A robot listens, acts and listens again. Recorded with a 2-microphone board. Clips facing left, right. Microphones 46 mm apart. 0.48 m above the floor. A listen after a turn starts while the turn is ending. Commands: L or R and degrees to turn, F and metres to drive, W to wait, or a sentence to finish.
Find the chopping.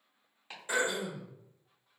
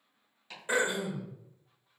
L25
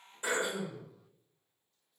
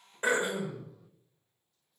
W
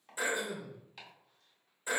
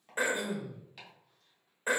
Found it: chopping, straight ahead.